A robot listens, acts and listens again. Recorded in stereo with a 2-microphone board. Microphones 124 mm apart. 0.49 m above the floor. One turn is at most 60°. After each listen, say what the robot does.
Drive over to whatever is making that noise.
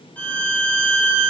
Turn 30° left.
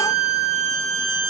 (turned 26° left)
Turn 60° left.
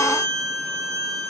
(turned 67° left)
Turn 60° left.
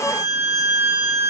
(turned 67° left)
Turn 10° left.
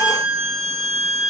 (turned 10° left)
Drive 1.0 m forward.
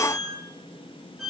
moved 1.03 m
Drive 1.0 m forward.
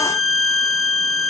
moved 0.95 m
Drive 1.0 m forward.
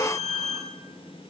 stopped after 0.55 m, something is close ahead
Arrived at the violin, straight ahead.